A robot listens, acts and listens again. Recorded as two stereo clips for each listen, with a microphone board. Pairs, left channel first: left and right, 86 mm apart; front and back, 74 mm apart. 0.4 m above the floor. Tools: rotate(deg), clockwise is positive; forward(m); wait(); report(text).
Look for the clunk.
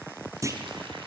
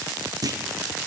rotate(140)
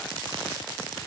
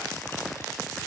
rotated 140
report("I heard a clunk from this way, but can't make it out now.")